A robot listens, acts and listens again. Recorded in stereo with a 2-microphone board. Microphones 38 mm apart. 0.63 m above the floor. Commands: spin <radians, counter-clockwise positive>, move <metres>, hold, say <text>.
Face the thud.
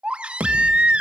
spin -1.57
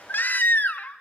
say I heard a thud from this way, but can't make it out now.